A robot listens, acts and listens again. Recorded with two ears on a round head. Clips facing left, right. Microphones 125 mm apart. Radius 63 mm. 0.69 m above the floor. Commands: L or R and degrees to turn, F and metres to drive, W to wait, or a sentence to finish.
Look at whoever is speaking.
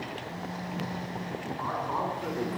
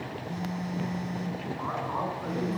L15
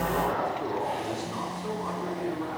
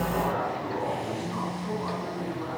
L25
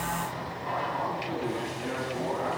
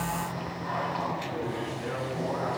L145
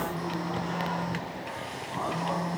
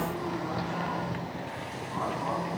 W
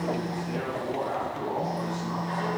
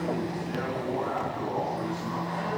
L25
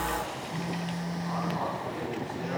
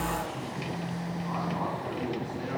Facing the man speaking.